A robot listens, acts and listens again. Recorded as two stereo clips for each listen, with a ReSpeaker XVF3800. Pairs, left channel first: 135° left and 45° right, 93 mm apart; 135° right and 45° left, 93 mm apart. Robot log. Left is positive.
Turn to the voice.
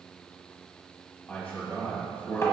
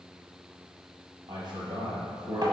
note: The man speaking: 70° left.
cmd yaw +70
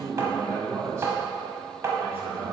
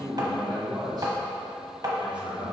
note: The man speaking is now 20° left.
cmd yaw +20
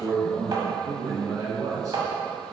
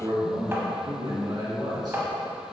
end: Facing the man speaking, 2 to 4 m away.